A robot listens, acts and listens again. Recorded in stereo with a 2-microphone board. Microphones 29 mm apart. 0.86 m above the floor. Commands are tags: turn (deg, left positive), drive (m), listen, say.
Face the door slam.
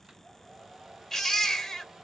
<listen/>
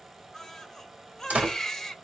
<turn deg="-60"/>
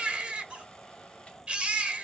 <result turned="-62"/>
<listen/>
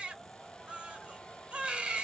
<say>I heard a door slam, but can't make it out now. It was about 5° left or 60° right.</say>